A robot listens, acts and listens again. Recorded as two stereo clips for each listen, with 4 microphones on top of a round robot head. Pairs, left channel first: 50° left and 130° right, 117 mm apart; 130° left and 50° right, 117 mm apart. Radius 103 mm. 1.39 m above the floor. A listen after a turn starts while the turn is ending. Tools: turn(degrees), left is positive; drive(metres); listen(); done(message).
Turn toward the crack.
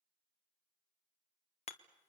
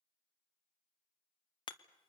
listen()
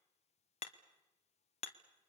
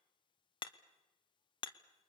listen()
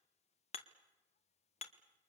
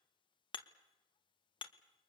done("I can't make out a crack, only hammering.")